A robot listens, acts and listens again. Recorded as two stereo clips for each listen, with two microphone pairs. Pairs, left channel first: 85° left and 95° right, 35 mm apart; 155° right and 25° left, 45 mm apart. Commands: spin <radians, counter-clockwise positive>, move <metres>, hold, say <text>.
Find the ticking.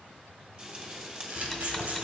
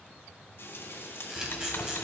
spin 2.97
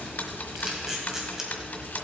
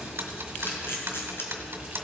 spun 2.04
spin 0.87
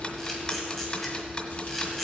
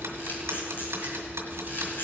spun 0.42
spin 0.44
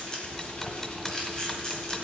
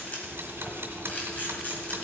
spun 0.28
spin 0.17
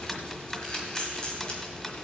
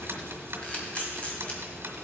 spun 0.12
say Found it: ticking, straight ahead.